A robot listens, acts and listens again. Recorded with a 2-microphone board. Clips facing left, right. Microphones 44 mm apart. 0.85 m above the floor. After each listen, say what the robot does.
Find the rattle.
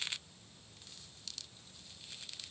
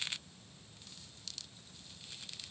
Keep listening.
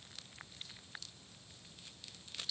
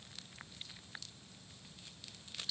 Keep listening.
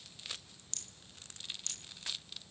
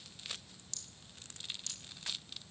Turn 50° left.
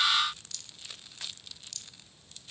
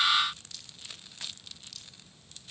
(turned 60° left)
Turn 10° right.
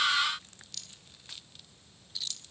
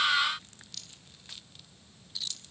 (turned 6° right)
Facing the rattle, 1 to 2 m away.